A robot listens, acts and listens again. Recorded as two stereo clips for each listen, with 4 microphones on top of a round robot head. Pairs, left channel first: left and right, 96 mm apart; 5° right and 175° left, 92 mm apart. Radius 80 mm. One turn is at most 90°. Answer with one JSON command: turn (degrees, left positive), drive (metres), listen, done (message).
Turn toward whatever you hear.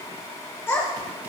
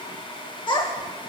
{"turn": 20}
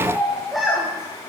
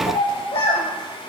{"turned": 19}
{"done": "Facing the child speaking."}